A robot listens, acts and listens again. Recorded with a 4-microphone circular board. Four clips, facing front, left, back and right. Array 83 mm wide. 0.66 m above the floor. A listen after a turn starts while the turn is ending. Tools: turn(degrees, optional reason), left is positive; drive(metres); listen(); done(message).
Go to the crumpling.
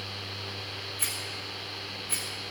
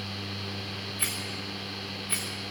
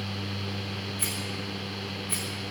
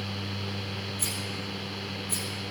listen()
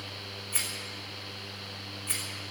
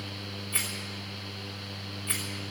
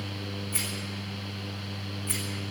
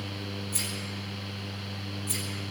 listen()
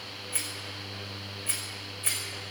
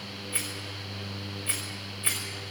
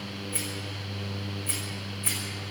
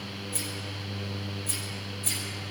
done("I can't make out crumpling to turn to.")